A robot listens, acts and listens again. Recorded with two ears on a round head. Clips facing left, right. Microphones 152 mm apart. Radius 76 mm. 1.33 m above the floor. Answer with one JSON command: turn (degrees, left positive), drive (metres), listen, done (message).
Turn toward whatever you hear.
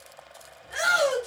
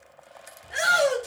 {"turn": -25}
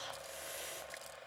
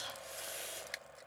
{"turn": -130}
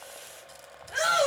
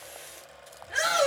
{"turn": -15}
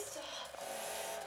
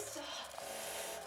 {"done": "Found it: a shout, straight ahead, 2 to 4 m away."}